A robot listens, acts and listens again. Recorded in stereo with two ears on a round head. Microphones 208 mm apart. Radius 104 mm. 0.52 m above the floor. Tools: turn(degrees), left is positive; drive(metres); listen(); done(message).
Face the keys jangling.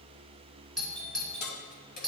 turn(degrees=40)
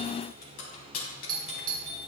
turn(degrees=105)
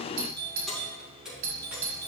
done("Found it: keys jangling, straight ahead.")